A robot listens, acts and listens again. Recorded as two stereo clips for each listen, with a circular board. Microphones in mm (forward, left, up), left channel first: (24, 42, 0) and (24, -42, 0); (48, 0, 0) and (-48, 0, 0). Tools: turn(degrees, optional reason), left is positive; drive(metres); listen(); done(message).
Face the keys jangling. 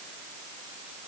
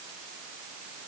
listen()
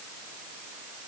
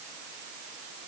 listen()
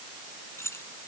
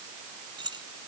turn(degrees=145, reason="The keys jangling: 145° left.")
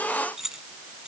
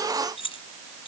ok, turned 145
done("Found it: keys jangling, straight ahead.")